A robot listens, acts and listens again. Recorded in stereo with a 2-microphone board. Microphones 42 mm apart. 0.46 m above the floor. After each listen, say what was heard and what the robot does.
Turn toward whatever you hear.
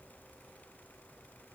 Keep listening.
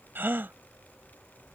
The gasp: about 55° right or 125° right. Turn 55° right.
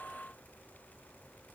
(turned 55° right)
Keep listening.
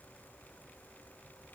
I heard a gasp, but can't make it out now. It was about straight ahead or 70° right.